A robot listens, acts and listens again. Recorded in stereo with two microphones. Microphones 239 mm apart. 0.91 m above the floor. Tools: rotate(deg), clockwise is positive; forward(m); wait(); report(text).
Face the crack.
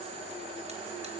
wait()
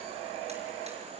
wait()
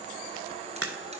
rotate(90)
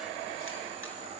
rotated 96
report("Facing where the crack came from. I can't hear it now.")